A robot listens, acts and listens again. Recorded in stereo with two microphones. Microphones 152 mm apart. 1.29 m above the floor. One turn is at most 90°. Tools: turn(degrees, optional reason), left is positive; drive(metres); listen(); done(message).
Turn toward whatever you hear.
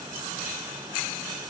listen()
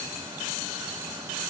listen()
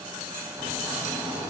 turn(degrees=-15, reason="The snoring: about 15° right or 165° right.")
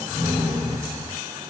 turn(degrees=-90, reason="So it is at 150° right.")
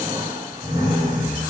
turn(degrees=-65, reason="The snoring is now 65° right.")
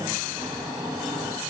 done("Found it: snoring, straight ahead, 2 to 4 m away.")